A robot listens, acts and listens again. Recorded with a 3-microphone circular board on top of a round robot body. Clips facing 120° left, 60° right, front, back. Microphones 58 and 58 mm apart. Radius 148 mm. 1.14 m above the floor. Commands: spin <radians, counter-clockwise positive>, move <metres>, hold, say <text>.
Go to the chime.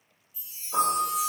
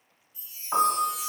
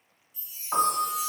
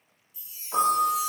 spin 2.18
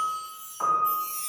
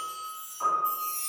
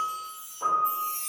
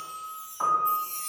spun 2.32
move 1.0
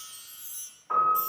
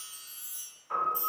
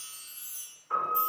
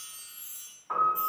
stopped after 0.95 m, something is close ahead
spin -0.17
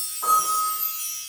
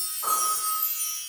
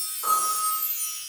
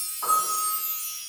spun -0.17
say Arrived at the chime, straight ahead.